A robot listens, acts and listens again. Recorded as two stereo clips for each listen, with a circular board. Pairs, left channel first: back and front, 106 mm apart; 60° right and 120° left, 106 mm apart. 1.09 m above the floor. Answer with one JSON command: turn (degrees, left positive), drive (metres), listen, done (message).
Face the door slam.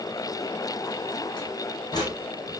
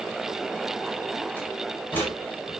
{"turn": -130}
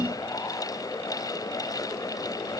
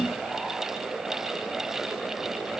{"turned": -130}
{"done": "Facing where the door slam came from. I can't hear it now."}